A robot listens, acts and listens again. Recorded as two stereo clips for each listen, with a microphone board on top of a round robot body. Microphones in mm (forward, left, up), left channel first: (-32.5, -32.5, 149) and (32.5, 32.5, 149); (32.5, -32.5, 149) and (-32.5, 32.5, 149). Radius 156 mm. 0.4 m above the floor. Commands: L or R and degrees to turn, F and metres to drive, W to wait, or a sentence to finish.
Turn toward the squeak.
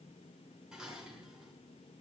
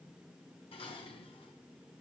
W
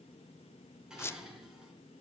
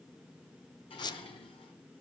R75
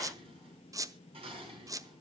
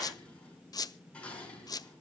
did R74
Facing the squeak, under 1 m away.